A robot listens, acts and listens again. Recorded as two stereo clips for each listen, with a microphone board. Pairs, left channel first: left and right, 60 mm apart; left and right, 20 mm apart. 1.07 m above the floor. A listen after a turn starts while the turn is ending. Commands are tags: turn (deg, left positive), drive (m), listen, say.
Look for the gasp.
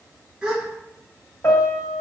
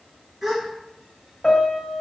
<turn deg="-30"/>
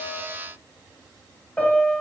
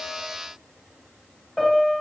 <listen/>
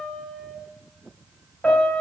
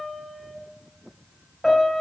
<say>I heard a gasp, but can't make it out now. It was about 20° left or 140° right.</say>